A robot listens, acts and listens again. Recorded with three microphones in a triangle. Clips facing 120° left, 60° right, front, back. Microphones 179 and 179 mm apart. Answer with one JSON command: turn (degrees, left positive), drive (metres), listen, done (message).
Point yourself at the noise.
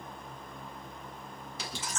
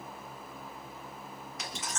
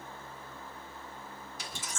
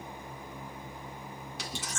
{"turn": 175}
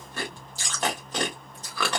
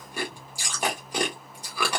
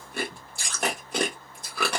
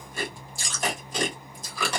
{"turn": 20}
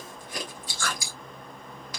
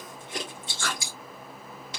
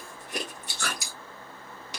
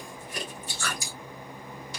{"done": "Found it: chewing, straight ahead."}